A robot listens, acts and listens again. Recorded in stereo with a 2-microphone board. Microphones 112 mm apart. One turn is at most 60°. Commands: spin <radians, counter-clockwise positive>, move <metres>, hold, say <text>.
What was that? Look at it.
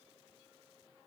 hold
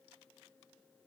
hold
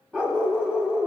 spin -0.52
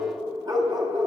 spin -1.05
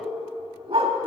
spin -0.96
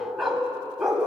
say Found it: a dog barking, straight ahead, 1 to 2 m away.